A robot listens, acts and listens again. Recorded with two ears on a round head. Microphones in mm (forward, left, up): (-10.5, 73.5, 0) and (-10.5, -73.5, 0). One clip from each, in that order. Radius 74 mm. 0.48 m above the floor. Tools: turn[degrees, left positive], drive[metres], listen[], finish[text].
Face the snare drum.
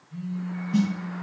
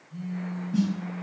Thought: The snare drum: about 75° left or 105° left.
Action: turn[75]
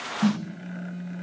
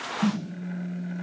Thought: So it is at 25° left.
Action: turn[25]
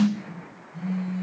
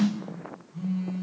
Thought: The snare drum is now 15° left.
Action: turn[15]
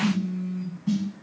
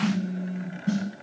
Action: finish[Facing the snare drum, under 1 m away.]